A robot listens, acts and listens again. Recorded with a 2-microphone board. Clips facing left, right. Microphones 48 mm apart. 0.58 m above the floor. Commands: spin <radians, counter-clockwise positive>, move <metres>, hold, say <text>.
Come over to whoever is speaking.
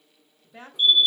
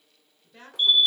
spin 0.26
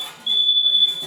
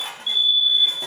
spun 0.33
hold
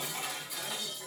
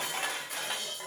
hold
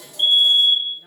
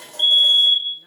say I heard a woman speaking, but can't make it out now. It was about 5° right or 145° left. I did not reach it.